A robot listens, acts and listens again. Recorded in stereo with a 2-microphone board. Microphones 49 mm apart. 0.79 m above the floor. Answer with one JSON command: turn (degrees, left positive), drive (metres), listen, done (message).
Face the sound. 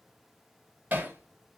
{"turn": -40}
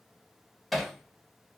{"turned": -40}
{"done": "Found it: hammering, straight ahead, 1 to 2 m away."}